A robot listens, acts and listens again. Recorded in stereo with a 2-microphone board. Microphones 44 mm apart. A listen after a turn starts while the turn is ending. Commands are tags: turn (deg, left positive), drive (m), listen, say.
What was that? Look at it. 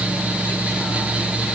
<listen/>
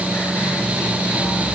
<listen/>
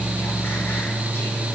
<say>I can't make out anything.</say>